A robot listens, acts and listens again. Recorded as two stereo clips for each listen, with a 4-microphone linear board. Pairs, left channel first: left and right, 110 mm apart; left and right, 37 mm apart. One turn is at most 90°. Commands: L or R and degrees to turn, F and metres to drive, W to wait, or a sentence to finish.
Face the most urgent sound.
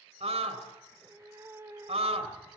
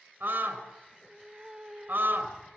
R75
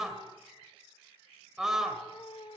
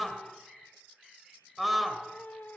Found it: a scream, straight ahead, 2 to 4 m away.